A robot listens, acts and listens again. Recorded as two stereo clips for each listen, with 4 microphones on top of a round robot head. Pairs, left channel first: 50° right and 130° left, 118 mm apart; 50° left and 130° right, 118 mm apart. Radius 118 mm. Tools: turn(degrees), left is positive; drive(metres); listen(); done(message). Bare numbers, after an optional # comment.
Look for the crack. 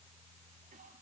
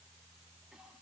listen()
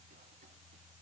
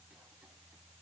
listen()
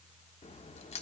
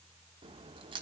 # The crack: 80° right.
turn(-80)
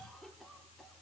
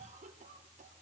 done("I heard a crack from this way, but can't make it out now.")